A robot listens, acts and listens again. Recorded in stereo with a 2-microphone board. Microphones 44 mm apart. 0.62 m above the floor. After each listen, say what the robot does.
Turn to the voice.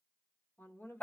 Turn 60° left.
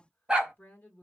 Turn 50° left.
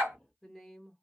Facing the woman speaking.